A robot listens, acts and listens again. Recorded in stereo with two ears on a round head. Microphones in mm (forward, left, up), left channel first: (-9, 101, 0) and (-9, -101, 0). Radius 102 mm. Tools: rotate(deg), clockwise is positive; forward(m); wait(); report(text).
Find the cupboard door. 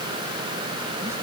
wait()
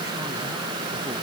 wait()
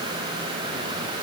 report("I can't make out a cupboard door.")